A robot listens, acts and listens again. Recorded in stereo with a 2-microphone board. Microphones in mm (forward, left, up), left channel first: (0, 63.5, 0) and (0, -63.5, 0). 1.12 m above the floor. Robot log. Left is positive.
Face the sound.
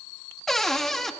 cmd yaw +30
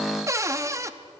note: So it is at 25° right.
cmd yaw -25
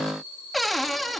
end: Found it: a cupboard door, straight ahead.